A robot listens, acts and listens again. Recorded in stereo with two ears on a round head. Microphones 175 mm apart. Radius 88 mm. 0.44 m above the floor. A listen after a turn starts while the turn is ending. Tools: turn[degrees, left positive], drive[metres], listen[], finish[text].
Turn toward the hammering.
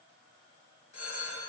Action: listen[]
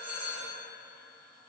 Action: listen[]
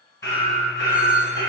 Thought: The hammering: about 20° left or 160° left.
Action: turn[20]
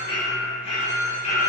Thought: So it is at 140° left.
Action: turn[140]
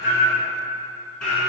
Action: finish[Found it: hammering, straight ahead.]